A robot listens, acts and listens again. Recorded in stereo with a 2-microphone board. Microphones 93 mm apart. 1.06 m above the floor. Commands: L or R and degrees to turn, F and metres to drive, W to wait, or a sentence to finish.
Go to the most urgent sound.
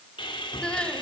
L30
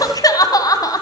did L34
L135
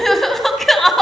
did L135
F1.0
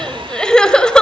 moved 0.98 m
L10
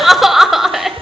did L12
F1.0
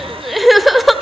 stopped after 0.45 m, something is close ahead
Arrived at the crying, straight ahead.